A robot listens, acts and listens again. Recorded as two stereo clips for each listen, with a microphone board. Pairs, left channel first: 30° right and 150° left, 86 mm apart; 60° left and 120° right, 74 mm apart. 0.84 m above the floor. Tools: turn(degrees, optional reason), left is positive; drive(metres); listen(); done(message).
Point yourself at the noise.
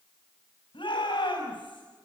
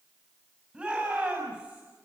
turn(degrees=-45, reason="The shout: 45° right.")
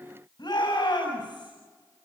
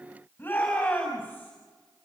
done("Found it: a shout, straight ahead, over 4 m away.")